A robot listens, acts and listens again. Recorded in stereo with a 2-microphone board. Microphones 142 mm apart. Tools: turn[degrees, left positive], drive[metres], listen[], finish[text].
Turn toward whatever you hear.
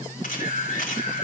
Thought: The camera shutter: about 70° left or 110° left.
Action: turn[70]
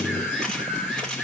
Action: finish[Facing the camera shutter.]